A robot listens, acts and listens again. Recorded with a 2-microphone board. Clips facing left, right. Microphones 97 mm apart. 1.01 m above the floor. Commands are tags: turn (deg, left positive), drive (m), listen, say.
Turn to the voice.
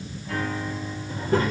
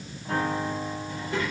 <turn deg="40"/>
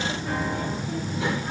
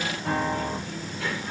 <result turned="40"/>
<turn deg="25"/>
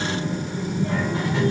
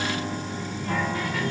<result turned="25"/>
<turn deg="25"/>
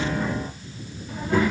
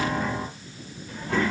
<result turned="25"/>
<turn deg="10"/>
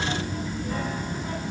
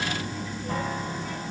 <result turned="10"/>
<say>Facing the child speaking, 2 to 4 m away.</say>